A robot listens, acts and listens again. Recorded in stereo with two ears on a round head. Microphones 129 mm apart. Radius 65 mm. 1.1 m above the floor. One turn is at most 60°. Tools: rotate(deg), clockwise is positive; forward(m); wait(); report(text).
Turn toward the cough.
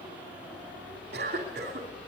rotate(60)
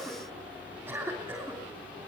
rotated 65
rotate(15)
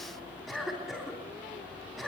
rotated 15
report("Facing the cough, 2 to 4 m away.")